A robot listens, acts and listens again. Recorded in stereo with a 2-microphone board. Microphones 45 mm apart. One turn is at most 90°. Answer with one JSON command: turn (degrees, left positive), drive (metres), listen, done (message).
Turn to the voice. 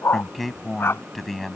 {"turn": 30}
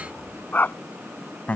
{"turn": 90}
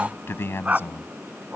{"turn": 65}
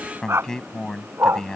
{"turn": 15}
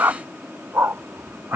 {"listen": true}
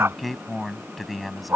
{"done": "Facing the man speaking."}